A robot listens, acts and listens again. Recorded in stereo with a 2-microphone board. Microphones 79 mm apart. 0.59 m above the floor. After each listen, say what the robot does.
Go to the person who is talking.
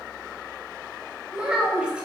Turn 30° right.
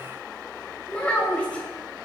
Turn 15° left.
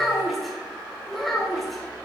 Drive 1.0 m forward.
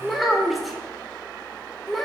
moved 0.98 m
Drive 1.0 m forward.
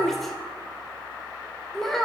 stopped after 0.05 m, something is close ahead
I am next to the child speaking.